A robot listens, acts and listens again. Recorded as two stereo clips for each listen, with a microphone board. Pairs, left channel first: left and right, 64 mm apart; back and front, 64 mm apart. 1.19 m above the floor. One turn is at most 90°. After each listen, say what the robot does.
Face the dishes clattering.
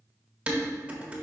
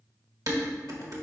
Turn 20° right.
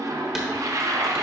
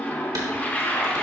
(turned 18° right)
Facing the dishes clattering, 1 to 2 m away.